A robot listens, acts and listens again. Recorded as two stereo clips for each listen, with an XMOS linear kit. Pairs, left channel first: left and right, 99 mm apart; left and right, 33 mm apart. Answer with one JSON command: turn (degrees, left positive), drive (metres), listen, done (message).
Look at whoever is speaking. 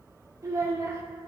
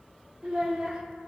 {"turn": -35}
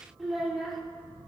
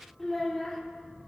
{"done": "Found it: a child speaking, straight ahead."}